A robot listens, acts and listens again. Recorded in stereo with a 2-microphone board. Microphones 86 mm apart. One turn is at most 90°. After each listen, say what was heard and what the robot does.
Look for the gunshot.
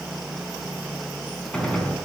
Turn 30° left.
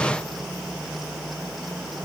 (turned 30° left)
Keep listening.
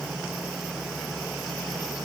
I heard a gunshot, but can't make it out now. It was about 15° right or 135° left.